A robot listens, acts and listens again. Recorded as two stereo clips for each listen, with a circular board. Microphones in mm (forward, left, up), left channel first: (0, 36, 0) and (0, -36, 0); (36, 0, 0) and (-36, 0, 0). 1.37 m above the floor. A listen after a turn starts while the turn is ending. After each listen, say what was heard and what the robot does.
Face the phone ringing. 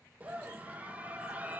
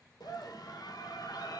Keep listening.
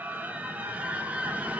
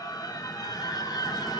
Keep listening.
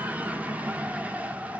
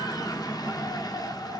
I can't make out a phone ringing, only a scream.